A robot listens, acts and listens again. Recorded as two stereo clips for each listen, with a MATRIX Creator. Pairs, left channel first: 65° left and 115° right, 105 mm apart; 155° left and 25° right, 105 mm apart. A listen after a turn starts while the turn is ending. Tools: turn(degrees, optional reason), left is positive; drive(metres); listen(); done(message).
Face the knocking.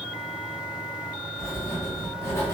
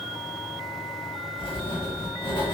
listen()
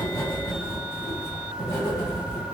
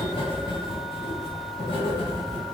listen()
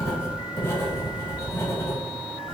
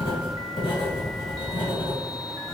done("I can't make out knocking, only writing.")